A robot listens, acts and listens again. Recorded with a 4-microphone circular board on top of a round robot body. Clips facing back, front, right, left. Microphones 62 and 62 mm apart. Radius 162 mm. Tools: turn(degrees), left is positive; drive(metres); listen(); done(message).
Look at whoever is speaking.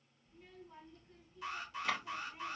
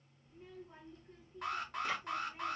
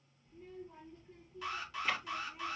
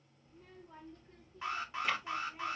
turn(degrees=60)
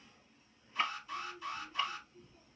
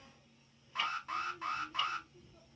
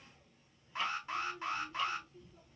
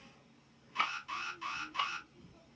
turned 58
done("Facing the child speaking, 2 to 4 m away.")